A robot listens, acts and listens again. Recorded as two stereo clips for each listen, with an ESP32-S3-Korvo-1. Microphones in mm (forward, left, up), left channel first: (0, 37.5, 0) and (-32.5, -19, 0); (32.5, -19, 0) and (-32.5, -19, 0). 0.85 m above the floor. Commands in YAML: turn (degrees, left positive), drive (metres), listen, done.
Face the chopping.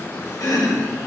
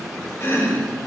turn: 45
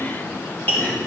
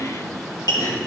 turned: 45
done: "Facing the chopping, 2 to 4 m away."